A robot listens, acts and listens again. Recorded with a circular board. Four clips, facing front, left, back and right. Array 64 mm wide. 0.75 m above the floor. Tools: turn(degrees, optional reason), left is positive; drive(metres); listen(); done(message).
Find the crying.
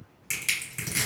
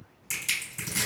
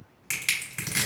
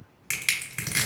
listen()
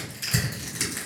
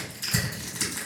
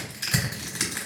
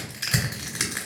listen()
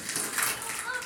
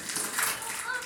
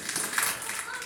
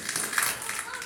turn(degrees=30, reason="The crying: 30° left.")
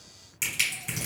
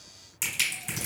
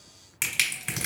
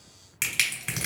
listen()
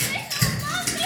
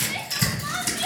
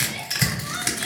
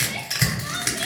turn(degrees=10, reason="The crying is now 10° left.")
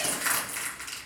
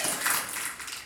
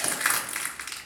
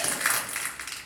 listen()
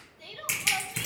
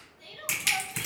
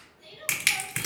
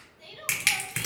done("Found it: crying, straight ahead.")